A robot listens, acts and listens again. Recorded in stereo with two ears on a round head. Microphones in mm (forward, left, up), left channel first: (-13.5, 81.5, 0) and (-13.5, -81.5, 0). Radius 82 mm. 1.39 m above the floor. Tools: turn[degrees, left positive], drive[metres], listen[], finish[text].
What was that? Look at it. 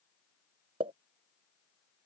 Thought: The pop: about 25° right or 155° right.
Action: turn[-25]
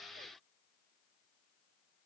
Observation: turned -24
Action: listen[]
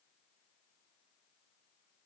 Action: finish[I heard a pop, but can't make it out now. It was about 5° right or 130° right.]